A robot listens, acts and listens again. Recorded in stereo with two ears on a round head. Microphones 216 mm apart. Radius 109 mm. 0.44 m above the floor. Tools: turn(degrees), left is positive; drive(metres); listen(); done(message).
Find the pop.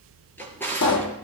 turn(degrees=90)
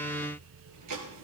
done("Facing where the pop came from. I can't hear it now.")